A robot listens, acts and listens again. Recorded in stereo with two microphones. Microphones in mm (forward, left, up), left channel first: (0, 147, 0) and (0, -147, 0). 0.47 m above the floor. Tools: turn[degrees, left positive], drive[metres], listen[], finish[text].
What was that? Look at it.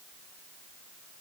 Action: listen[]
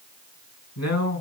Thought: The man speaking: about 65° left or 115° left.
Action: turn[65]
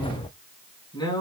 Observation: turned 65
Thought: So it is at 15° left.
Action: turn[15]
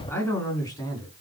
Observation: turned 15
Thought: The man speaking is now 15° left.
Action: turn[15]
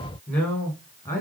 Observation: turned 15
Thought: The man speaking is now 10° left.
Action: turn[10]
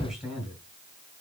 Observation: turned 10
Action: finish[Found it: a man speaking, straight ahead.]